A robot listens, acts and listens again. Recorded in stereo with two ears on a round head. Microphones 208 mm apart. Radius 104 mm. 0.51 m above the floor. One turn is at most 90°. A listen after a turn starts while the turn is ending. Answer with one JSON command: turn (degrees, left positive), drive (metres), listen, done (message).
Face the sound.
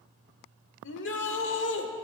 {"turn": 55}
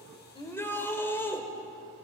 {"turn": 10}
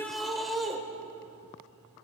{"done": "Facing the shout."}